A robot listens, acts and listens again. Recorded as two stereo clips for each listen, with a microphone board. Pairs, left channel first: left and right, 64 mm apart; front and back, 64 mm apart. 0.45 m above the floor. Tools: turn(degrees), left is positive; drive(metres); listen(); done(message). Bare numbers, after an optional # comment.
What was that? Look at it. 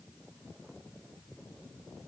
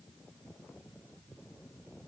listen()
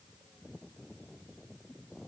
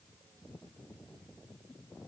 listen()
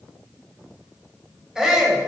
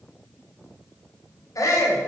# The shout: 10° right.
turn(-10)
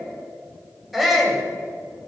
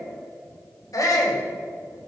done("Found it: a shout, straight ahead.")